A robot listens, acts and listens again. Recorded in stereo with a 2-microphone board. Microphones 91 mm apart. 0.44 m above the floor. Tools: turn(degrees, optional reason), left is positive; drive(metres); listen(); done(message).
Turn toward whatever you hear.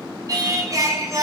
turn(degrees=-40, reason="The singing: about 40° right or 140° right.")
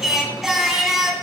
done("Found it: singing, straight ahead, 1 to 2 m away.")